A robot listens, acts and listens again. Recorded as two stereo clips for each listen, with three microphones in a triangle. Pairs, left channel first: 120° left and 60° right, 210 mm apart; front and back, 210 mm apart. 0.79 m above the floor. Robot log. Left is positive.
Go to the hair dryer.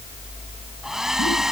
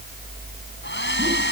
note: The hair dryer: 30° left.
cmd yaw +30
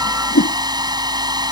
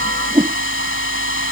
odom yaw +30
note: The hair dryer is now 10° left.
cmd yaw +10
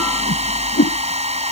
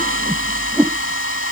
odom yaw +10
cmd fwd 1.0
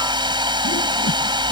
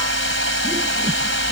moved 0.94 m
note: The hair dryer is now 10° left.
cmd yaw +10
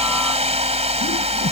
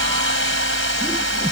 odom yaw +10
cmd fwd 1.0
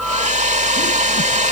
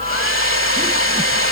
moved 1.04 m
cmd fwd 1.0
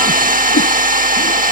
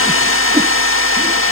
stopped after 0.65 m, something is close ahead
note: The hair dryer is now 10° right.
cmd yaw -10
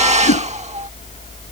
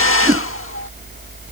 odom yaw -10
end: I am next to the hair dryer.